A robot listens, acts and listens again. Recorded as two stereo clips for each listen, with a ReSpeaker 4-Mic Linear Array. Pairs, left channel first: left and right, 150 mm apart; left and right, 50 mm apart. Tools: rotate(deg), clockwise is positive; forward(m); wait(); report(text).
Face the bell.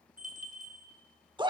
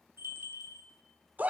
rotate(60)
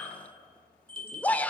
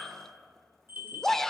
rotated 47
rotate(45)
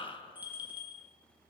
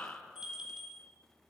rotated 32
rotate(15)
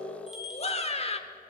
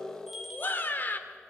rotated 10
report("Facing the bell, 2 to 4 m away.")